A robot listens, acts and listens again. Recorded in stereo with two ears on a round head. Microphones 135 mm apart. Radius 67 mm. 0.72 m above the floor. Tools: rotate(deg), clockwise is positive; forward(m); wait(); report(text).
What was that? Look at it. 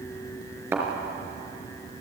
rotate(30)
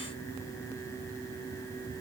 wait()
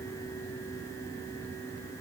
report("I heard a thud, but can't make it out now. It was about 15° left or 135° right.")